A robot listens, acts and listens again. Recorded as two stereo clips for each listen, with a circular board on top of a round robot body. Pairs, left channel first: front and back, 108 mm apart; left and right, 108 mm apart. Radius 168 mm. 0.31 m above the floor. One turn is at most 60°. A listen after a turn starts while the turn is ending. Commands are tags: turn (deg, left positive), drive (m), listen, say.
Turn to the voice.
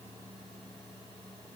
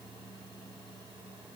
<listen/>
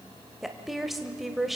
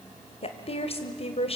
<turn deg="60"/>
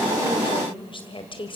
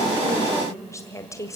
<turn deg="30"/>
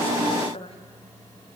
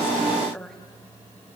<say>Facing the woman speaking, 2 to 4 m away.</say>